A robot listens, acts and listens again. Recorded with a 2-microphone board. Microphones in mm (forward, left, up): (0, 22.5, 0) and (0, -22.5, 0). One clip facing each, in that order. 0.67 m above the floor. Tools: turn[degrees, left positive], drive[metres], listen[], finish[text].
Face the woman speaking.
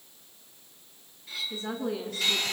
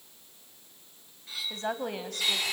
Thought: The woman speaking: about 60° right or 120° right.
Action: turn[-60]
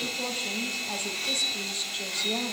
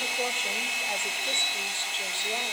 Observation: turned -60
Thought: So it is at 20° right.
Action: turn[-20]
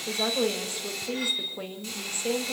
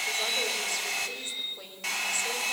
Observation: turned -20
Thought: The woman speaking is now 25° left.
Action: turn[25]
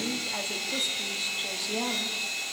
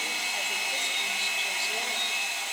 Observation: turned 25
Action: listen[]
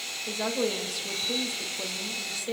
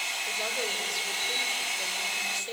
Action: finish[Found it: a woman speaking, straight ahead.]